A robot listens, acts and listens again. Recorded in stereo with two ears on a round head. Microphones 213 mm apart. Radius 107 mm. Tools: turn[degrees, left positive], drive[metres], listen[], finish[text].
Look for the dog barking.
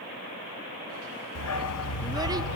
Thought: The dog barking: about 70° left or 110° left.
Action: turn[70]
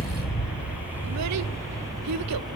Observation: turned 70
Thought: So it is at 20° right.
Action: turn[-20]
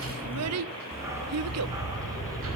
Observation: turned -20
Thought: The dog barking is now 15° right.
Action: turn[-15]
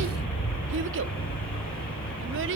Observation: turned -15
Action: finish[Facing the dog barking.]